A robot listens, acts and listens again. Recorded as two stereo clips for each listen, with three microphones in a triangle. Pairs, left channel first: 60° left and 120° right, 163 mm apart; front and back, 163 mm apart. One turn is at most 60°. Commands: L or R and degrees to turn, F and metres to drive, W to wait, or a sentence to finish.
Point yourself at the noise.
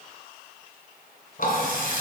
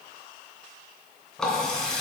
L60
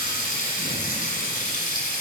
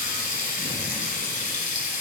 L30
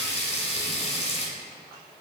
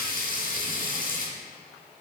L15
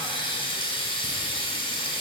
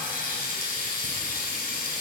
Facing the running tap, 2 to 4 m away.